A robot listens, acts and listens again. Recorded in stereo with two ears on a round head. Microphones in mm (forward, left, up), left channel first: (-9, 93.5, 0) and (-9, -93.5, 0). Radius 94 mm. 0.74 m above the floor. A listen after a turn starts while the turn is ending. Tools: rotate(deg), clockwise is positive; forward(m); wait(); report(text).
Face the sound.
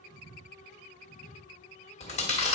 rotate(-30)
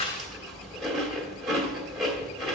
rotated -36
report("Found it: chewing, straight ahead, 1 to 2 m away.")